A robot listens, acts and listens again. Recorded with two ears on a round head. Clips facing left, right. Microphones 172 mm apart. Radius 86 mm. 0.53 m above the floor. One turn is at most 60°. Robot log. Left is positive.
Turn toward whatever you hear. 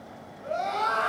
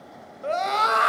note: The scream: about 70° right or 110° right.
cmd yaw -60
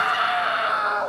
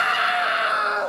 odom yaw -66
note: So it is at 25° right.
cmd yaw -25
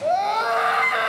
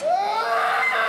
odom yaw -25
end: Facing the scream, 2 to 4 m away.